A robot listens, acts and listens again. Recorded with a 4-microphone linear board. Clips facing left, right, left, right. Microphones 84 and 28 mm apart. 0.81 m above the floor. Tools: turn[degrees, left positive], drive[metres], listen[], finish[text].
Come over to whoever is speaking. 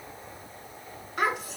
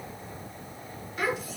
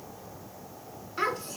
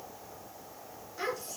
Thought: The child speaking: about 65° left or 115° left.
Action: turn[65]
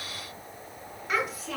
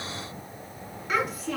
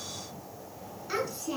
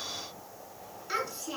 Action: drive[1.0]
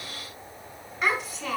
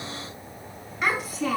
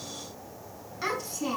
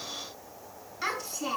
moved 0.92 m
Action: drive[1.0]
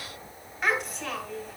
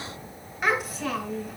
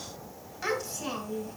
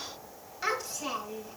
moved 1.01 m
Action: drive[1.0]
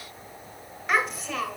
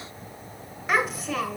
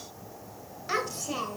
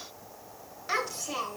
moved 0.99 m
Action: drive[1.0]
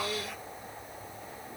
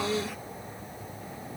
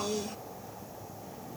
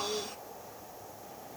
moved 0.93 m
Action: drive[1.0]
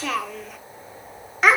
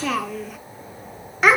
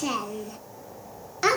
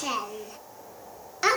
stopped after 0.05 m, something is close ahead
Action: finish[Arrived at the child speaking, straight ahead.]